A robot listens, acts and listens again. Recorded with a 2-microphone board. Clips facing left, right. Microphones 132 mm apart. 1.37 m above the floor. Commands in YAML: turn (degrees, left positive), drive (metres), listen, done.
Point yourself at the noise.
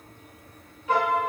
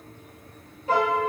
turn: -35
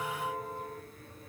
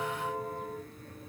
done: "Found it: a piano, straight ahead, 1 to 2 m away."